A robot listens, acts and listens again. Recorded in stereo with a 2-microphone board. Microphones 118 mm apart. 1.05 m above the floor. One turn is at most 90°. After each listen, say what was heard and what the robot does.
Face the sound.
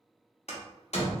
The door slam: about 65° left or 115° left. Turn 65° left.
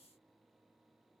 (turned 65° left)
Keep listening.
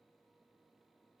I heard a door slam, but can't make it out now. It was about straight ahead or 50° left.